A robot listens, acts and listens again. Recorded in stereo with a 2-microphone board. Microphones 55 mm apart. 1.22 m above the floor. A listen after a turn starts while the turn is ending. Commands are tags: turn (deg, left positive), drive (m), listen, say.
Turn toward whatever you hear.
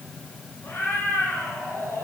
<turn deg="55"/>
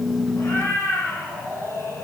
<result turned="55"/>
<turn deg="70"/>
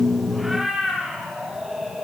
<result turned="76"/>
<say>Facing the cat meowing, over 4 m away.</say>